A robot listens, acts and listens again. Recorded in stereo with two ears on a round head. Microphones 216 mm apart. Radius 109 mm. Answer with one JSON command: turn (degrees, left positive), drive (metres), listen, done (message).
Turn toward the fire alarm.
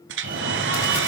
{"turn": -35}
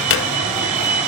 {"done": "Facing the fire alarm."}